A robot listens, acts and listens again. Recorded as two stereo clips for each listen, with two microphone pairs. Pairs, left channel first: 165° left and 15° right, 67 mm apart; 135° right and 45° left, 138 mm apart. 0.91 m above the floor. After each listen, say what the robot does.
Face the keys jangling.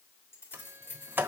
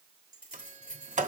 Turn 145° right.
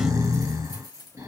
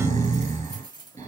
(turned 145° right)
Turn 15° right.
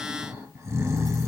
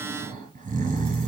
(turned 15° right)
Keep listening.
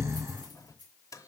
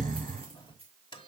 Facing the keys jangling, 2 to 4 m away.